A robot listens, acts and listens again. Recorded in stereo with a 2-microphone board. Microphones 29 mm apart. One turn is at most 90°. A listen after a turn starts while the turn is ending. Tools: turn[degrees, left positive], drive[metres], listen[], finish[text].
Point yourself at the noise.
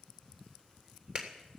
Thought: The clap: about 45° right or 135° right.
Action: turn[-45]
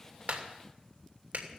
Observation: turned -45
Thought: So it is at 90° right.
Action: turn[-90]
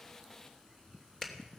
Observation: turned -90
Thought: The clap is now 15° left.
Action: turn[15]
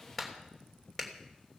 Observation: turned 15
Action: finish[Found it: a clap, straight ahead, 2 to 4 m away.]